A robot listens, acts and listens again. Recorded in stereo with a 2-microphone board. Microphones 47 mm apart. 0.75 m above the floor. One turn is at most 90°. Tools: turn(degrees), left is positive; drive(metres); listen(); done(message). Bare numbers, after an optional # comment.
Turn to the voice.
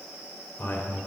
# The man speaking: about 45° left or 135° left.
turn(45)
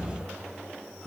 # So it is at 10° left.
turn(10)
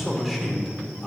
done("Found it: a man speaking, straight ahead.")